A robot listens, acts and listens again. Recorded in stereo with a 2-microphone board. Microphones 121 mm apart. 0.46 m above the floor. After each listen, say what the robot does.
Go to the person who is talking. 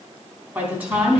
Turn 30° right.
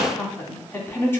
Turn 20° left.
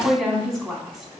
Drive 1.0 m forward.
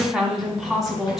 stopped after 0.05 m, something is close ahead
Something is in my way. I am facing the woman speaking but have not reached it.